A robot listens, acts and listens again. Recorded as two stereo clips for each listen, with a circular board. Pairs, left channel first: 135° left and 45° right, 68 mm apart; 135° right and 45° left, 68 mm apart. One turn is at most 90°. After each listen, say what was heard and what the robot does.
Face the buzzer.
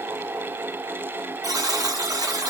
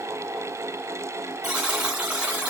The buzzer: 35° right. Turn 35° right.
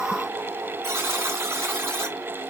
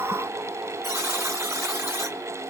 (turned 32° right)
Found it: a buzzer, straight ahead, 1 to 2 m away.